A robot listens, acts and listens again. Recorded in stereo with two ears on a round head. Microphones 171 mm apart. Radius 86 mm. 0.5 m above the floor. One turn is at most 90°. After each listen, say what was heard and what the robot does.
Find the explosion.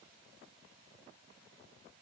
Keep listening.
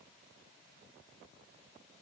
Keep listening.
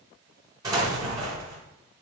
The explosion: about 20° right or 160° right. Turn 20° right.
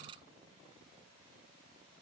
Keep listening.
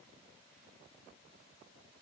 I heard an explosion, but can't make it out now. It was about straight ahead or 140° right.